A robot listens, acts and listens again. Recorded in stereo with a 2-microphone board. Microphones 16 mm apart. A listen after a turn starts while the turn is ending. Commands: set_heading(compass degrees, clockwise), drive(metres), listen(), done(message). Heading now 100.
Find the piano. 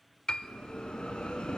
set_heading(45)
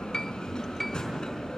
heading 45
set_heading(30)
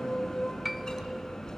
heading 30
done("Found it: a piano, straight ahead, 1 to 2 m away.")